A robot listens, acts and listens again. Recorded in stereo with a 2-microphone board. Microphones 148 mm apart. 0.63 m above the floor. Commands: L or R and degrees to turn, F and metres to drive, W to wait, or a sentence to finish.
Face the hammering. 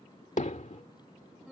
L55
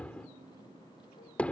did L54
L10
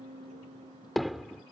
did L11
Found it: hammering, straight ahead.